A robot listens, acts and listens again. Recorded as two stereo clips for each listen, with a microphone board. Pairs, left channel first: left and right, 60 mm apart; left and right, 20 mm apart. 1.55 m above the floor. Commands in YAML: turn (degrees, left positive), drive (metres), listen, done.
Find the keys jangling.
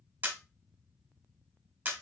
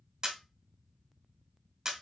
listen: true
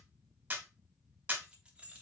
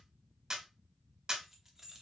turn: -20
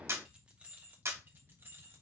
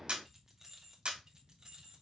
turn: -40
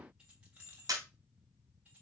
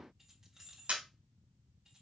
turn: -25
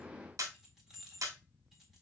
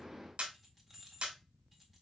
done: "Found it: keys jangling, straight ahead."